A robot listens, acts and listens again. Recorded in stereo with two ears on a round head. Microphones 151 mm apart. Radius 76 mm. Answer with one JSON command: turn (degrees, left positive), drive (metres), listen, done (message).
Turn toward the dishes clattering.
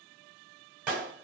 {"listen": true}
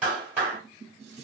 {"turn": -40}
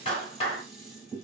{"done": "Found it: dishes clattering, straight ahead."}